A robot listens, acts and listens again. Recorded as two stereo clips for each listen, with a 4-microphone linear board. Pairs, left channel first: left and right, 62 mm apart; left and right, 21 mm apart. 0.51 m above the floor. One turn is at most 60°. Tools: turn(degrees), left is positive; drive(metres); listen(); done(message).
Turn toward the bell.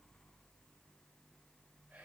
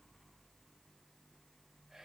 listen()
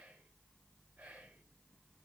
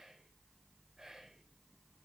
listen()
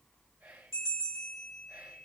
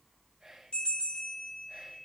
turn(degrees=60)
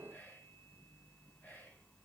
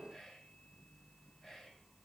listen()
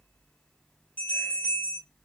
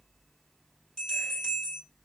turn(degrees=30)
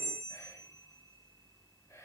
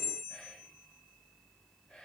done("Found it: a bell, straight ahead, 2 to 4 m away.")